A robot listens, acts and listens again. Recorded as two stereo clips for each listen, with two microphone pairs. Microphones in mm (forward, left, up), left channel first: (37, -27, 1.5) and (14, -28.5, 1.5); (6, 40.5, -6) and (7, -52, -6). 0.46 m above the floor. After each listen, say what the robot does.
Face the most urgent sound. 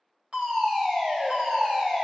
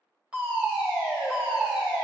Turn 165° right.
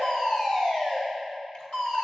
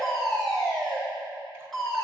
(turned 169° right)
Facing the fire alarm.